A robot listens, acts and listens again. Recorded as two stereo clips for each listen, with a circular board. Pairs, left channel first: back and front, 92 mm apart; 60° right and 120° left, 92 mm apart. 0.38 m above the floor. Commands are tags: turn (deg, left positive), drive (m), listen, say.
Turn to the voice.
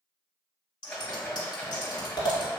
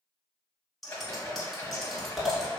<listen/>
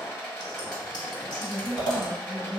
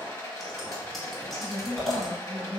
<turn deg="155"/>
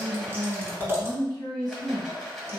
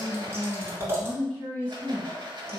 <say>Found it: a woman speaking, straight ahead.</say>